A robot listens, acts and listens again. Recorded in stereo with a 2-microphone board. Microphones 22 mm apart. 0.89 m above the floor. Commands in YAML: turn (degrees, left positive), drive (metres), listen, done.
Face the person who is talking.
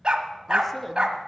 turn: 30
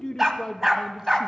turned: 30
turn: 140
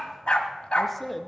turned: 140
done: "Found it: a man speaking, straight ahead."